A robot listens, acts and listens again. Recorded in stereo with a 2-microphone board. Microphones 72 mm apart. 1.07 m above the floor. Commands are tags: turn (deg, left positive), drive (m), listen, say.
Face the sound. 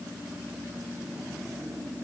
<listen/>
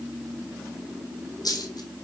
<turn deg="60"/>
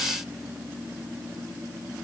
<listen/>
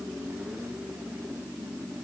<say>I heard a dropped coin, but can't make it out now. It was about straight ahead or 60° left.</say>